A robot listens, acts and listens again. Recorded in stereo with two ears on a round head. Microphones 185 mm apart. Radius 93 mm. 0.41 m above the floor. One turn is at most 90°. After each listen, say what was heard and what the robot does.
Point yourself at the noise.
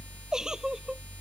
Turn 30° right.
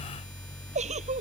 So it is at 145° right. Turn 90° right.
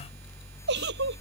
The giggle is now 55° right. Turn 55° right.
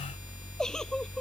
Facing the giggle.